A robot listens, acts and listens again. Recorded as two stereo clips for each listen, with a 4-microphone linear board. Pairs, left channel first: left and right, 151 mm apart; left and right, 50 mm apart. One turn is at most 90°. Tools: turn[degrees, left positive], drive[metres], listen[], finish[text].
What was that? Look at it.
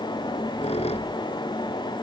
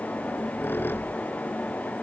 Thought: The squeak: about 50° left or 130° left.
Action: turn[50]
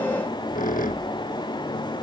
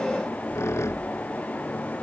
Thought: So it is at 80° left.
Action: turn[80]
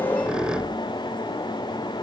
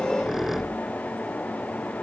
Action: finish[Facing the squeak.]